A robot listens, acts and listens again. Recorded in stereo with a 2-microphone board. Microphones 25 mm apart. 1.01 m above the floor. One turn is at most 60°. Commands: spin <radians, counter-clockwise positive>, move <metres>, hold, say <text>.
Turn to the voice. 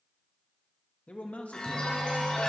spin 1.05
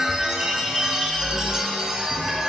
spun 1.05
hold
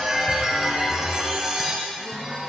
hold
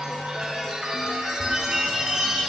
say I heard a man speaking, but can't make it out now. It was about straight ahead or 60° left.